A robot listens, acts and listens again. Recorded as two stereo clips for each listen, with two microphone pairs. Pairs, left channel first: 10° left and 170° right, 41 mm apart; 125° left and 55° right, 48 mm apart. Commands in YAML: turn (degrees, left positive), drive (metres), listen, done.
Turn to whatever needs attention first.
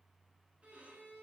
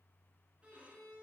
listen: true
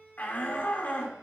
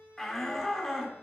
turn: 45
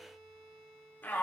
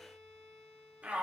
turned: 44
done: "Found it: a shout, straight ahead."